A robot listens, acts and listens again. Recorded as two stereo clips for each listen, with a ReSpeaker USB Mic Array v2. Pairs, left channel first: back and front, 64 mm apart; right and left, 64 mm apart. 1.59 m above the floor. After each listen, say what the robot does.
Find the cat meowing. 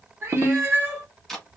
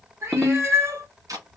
Turn 50° left.
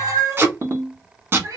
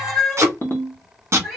Found it: a cat meowing, straight ahead, 2 to 4 m away.